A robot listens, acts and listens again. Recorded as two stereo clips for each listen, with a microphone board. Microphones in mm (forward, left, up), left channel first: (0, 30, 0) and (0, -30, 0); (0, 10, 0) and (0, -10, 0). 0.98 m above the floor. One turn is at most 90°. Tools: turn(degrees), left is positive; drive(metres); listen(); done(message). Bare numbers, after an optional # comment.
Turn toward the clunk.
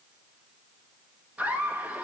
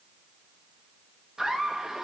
listen()
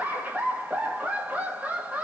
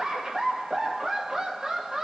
listen()
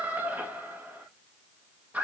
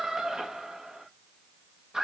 done("I can't make out a clunk to turn to.")